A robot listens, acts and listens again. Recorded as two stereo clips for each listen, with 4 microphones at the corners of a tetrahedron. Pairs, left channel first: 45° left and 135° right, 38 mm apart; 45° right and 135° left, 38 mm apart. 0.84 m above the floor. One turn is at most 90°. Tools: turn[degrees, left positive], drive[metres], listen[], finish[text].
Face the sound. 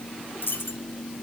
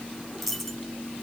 Thought: The dropped coin: 45° left.
Action: turn[45]
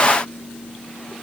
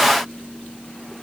Action: finish[I heard a dropped coin from this way, but can't make it out now.]